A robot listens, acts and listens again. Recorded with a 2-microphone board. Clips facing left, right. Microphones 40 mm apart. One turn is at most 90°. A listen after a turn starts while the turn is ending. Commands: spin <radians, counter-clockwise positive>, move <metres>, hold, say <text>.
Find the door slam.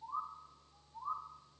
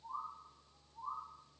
hold
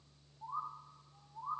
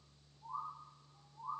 hold
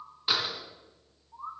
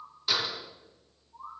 spin 0.35
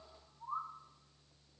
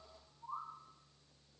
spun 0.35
hold
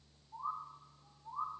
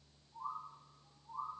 say I heard a door slam, but can't make it out now. It was about straight ahead or 140° left.